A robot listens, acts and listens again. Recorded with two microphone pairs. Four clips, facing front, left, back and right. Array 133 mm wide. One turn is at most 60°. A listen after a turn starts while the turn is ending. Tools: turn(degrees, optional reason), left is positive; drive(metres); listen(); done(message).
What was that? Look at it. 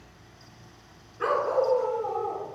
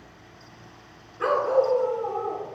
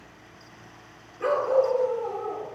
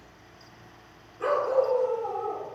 turn(degrees=50, reason="The dog barking: 50° left.")
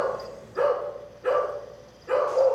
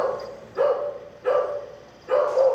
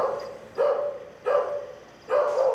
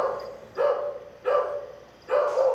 done("Facing the dog barking.")